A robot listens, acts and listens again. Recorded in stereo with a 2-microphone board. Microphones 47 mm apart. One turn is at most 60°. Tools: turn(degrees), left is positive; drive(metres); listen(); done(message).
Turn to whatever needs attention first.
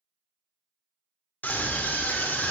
turn(degrees=40)
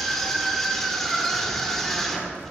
done("Found it: a scream, straight ahead.")